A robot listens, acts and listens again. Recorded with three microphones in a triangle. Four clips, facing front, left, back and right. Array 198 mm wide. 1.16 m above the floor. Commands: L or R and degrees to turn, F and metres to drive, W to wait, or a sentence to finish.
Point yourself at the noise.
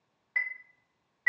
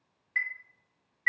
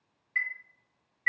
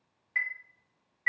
R30
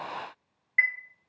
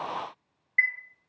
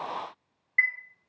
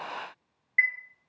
Found it: a chime, straight ahead.